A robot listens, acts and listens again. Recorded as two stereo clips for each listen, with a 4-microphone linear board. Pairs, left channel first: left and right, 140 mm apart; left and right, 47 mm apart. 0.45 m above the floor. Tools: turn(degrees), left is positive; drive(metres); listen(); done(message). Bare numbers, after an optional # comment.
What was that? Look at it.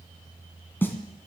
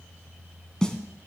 turn(30)
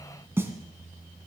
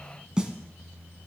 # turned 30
# So it is at 15° right.
turn(-15)
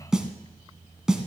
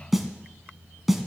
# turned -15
done("Found it: a snare drum, straight ahead, 1 to 2 m away.")